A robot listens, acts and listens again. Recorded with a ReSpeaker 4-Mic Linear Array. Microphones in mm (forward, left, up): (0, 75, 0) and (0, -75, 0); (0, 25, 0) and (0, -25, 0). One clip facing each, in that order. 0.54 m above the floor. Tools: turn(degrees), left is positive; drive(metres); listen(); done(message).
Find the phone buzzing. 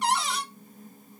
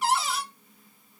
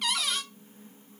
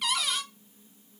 listen()
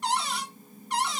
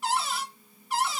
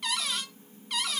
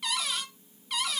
listen()
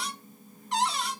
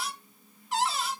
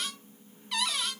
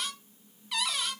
done("I can't make out a phone buzzing, only a cupboard door.")